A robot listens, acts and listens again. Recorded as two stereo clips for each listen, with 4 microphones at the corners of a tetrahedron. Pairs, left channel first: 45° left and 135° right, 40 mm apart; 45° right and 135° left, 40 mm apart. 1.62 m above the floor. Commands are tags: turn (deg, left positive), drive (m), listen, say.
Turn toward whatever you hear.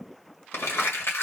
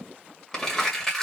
<turn deg="30"/>
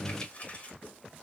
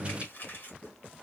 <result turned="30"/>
<turn deg="-15"/>
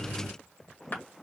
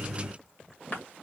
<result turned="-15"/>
<say>Facing the crumpling.</say>